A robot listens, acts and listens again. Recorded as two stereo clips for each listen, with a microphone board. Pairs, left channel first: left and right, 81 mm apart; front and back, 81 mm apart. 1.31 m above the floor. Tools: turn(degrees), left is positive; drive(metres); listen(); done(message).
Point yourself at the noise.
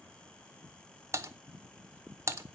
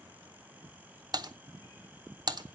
turn(degrees=-145)
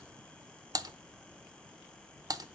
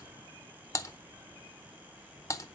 turn(degrees=-50)
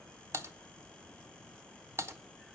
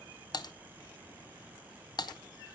turn(degrees=-35)
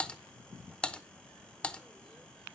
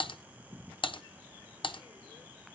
turn(degrees=15)
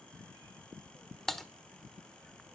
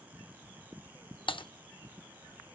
done("Found it: typing on a keyboard, straight ahead.")